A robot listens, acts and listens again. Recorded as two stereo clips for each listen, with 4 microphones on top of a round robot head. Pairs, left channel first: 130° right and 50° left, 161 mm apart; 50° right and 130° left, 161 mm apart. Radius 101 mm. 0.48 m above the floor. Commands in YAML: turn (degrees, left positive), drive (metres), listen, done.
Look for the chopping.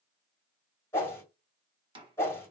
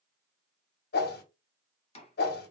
done: "Found it: chopping, straight ahead, 2 to 4 m away."